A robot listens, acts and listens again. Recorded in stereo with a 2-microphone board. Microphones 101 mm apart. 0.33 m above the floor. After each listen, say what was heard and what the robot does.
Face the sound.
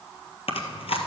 The chewing: about 70° left or 110° left. Turn 70° left.
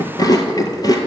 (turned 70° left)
So it is at 40° left. Turn 40° left.
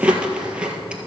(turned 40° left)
The chewing is now 10° right. Turn 10° right.
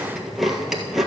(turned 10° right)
Found it: chewing, straight ahead.